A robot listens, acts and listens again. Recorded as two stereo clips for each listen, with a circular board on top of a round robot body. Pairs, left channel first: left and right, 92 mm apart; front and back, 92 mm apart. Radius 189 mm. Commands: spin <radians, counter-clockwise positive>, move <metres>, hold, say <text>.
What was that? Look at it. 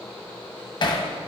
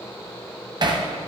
spin 2.36
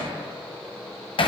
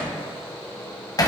spin 0.96
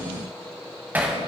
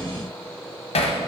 spin -0.26
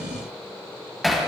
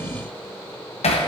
say Facing the hammering.